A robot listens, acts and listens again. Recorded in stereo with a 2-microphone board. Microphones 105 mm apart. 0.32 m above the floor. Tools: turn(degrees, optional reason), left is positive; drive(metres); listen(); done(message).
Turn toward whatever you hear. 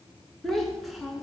turn(degrees=30)
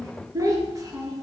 turn(degrees=-35, reason="So it is at 35° right.")
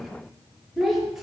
done("Found it: a child speaking, straight ahead, over 4 m away.")